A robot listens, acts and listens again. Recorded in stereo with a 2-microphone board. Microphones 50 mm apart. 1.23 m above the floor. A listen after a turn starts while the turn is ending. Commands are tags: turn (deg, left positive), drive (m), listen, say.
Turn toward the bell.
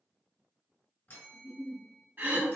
<turn deg="50"/>
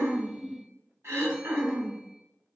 <listen/>
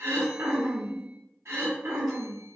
<listen/>
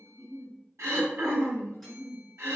<say>I heard a bell, but can't make it out now. It was about straight ahead or 80° left.</say>